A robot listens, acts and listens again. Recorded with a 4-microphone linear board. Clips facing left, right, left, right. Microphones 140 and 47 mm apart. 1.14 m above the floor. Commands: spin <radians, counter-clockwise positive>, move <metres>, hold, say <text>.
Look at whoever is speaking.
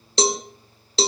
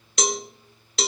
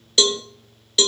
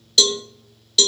hold
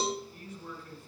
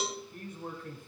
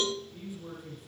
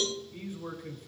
spin -0.96
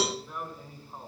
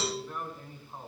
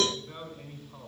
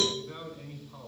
say Facing the man speaking, over 4 m away.